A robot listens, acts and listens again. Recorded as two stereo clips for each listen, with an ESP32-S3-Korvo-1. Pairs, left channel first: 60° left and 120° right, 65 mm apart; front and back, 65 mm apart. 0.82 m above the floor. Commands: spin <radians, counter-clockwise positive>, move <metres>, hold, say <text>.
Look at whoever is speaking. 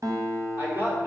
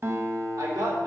spin 3.14
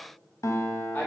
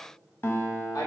say Facing the man speaking, 2 to 4 m away.